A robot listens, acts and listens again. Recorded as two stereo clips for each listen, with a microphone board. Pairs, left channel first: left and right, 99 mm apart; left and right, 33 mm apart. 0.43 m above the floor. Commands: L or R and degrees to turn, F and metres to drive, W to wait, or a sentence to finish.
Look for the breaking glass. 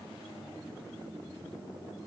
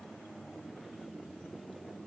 W
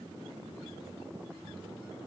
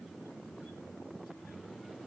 W
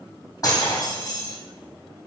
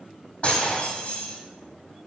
L35
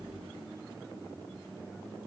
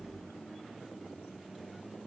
W
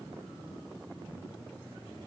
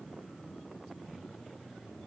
I heard breaking glass, but can't make it out now. It was about straight ahead or 110° left.